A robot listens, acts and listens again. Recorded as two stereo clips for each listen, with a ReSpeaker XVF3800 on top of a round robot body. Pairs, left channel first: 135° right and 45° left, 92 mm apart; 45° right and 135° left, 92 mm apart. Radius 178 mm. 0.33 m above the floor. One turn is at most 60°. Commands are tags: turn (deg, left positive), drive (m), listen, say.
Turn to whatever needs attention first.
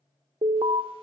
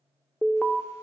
<turn deg="35"/>
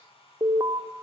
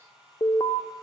<say>Facing the alarm, 1 to 2 m away.</say>